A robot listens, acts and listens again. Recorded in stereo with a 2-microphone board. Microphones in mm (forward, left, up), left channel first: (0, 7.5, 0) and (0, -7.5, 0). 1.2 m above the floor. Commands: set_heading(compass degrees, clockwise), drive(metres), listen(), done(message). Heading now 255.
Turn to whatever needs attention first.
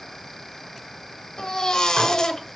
set_heading(200)
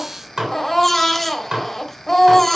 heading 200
set_heading(185)
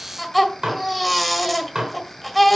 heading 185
done("Found it: a baby crying, straight ahead.")